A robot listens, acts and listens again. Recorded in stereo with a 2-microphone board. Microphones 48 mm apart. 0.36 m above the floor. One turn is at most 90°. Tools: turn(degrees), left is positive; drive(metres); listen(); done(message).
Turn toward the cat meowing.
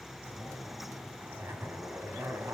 listen()
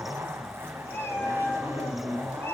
turn(degrees=55)
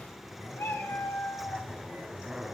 turn(degrees=60)
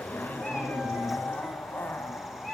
done("Found it: a cat meowing, straight ahead.")